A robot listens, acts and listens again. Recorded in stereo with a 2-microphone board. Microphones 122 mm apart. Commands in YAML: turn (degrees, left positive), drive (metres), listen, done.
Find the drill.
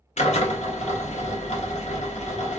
turn: 70
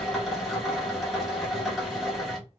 done: "Found it: a drill, straight ahead, 1 to 2 m away."